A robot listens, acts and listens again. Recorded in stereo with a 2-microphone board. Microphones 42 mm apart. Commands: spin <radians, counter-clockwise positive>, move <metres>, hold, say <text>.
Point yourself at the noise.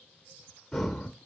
spin 0.52
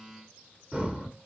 spin -0.35
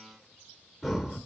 say Facing the breathing.